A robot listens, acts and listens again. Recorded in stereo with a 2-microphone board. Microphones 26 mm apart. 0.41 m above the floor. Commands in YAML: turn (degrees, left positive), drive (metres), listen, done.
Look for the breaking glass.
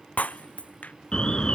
turn: 60
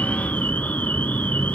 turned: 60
listen: true
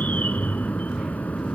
done: "I heard breaking glass, but can't make it out now. It was about straight ahead or 60° left."